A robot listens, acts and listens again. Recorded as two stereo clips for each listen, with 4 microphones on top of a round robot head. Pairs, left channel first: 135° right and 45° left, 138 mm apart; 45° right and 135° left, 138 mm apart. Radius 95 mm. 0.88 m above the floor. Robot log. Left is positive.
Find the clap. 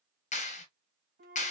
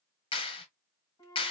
note: The clap: 100° right.
cmd yaw -100
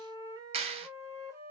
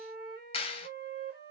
end: Facing the clap, 1 to 2 m away.